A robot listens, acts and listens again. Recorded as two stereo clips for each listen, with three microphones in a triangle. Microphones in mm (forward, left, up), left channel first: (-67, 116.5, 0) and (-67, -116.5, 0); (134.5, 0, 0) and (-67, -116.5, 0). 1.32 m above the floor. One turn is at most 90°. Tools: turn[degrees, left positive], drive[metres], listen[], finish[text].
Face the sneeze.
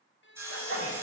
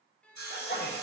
Thought: The sneeze: 70° left.
Action: turn[70]
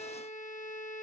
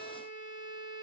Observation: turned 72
Action: finish[Facing where the sneeze came from. I can't hear it now.]